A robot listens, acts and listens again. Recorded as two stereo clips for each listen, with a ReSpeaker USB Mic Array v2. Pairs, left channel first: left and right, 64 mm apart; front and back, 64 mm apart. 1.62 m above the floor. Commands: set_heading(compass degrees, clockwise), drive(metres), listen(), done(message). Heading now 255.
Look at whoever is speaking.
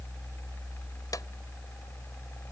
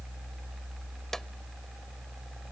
listen()
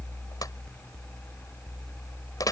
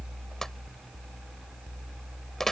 listen()
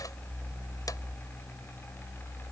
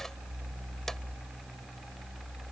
done("I can't make out anyone speaking to turn to.")